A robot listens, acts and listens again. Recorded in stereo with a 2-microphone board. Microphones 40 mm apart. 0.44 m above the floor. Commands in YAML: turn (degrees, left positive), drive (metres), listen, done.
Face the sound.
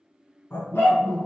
turn: 75
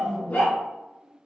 turn: 45
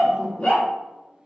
turn: 35
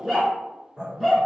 done: "Found it: a dog barking, straight ahead."